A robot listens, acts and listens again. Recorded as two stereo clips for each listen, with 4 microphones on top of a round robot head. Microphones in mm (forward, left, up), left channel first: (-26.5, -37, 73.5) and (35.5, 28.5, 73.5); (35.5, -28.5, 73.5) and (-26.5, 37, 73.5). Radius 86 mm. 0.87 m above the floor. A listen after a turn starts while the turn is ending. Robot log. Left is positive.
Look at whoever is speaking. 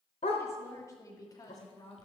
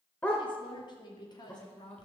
note: The woman speaking: 90° right.
cmd yaw -90
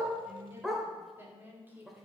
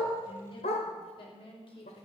note: The woman speaking is now 25° right.
cmd yaw -25
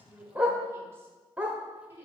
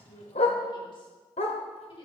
note: The woman speaking is now 20° right.
cmd yaw -20
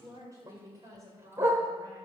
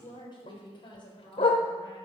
note: The woman speaking is now 10° right.
cmd yaw -10
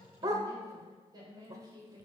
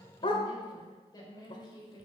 end: Facing the woman speaking, over 4 m away.